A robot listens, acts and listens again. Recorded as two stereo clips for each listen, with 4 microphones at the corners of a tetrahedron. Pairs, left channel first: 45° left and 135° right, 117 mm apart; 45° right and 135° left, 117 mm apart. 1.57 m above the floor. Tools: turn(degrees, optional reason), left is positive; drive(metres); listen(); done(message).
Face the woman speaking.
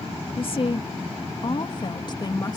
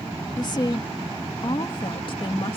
turn(degrees=-10, reason="The woman speaking: 10° right.")
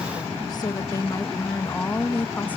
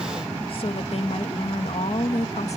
turn(degrees=-30, reason="The woman speaking is now 30° right.")
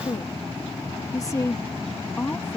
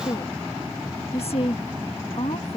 turn(degrees=-25, reason="The woman speaking is now 25° right.")
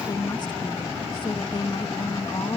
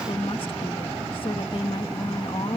done("Facing the woman speaking.")